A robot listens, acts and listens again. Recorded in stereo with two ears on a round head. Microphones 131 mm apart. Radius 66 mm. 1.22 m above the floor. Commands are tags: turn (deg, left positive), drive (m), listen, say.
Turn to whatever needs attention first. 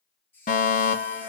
<turn deg="55"/>
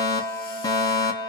<turn deg="30"/>
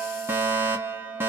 <turn deg="-15"/>
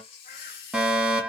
<say>Facing the fire alarm, 1 to 2 m away.</say>